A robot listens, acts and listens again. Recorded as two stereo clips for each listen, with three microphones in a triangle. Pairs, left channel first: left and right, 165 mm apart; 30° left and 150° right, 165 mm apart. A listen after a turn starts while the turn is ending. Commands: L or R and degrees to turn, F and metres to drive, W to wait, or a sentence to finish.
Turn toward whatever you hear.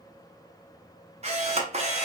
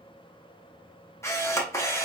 R45
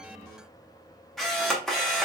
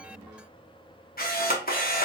Found it: a camera shutter, straight ahead, under 1 m away.